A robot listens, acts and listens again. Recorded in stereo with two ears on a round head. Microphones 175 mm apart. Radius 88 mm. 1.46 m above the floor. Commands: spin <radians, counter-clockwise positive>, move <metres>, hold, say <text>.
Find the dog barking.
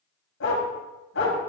spin 1.13
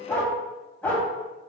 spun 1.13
say Facing the dog barking, 2 to 4 m away.